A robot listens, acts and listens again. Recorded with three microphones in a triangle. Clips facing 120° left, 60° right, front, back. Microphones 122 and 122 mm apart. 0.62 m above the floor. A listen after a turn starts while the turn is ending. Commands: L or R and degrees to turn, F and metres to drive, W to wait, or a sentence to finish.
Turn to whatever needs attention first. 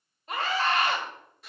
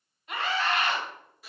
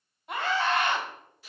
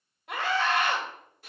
L175
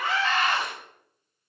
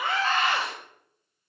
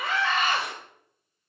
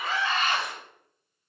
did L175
R40
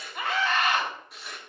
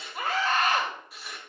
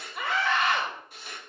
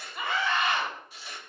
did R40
R10
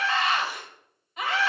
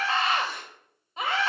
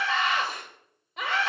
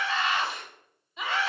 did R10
Found it: a scream, straight ahead, 2 to 4 m away.